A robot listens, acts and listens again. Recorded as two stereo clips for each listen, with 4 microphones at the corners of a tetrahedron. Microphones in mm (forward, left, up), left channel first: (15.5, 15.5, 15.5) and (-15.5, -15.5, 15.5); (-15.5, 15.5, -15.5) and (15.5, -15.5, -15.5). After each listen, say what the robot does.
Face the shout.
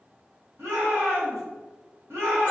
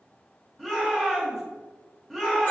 Turn 140° right.
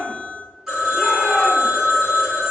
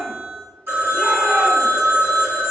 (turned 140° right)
Turn 15° right.
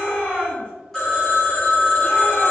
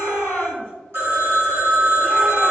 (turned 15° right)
Found it: a shout, straight ahead, 1 to 2 m away.